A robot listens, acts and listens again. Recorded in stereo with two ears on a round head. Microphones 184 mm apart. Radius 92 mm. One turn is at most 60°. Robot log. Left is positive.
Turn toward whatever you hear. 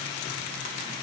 cmd idle
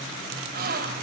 note: The gasp: about 50° right or 130° right.
cmd yaw -50
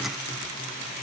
cmd idle
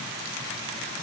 end: I heard a gasp, but can't make it out now. It was about straight ahead or 80° right.